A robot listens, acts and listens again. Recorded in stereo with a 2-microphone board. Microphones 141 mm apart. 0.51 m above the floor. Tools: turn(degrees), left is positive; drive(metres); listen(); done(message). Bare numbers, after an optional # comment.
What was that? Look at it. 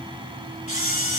# The camera shutter: about 55° left or 125° left.
turn(55)
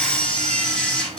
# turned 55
done("Facing the camera shutter, 1 to 2 m away.")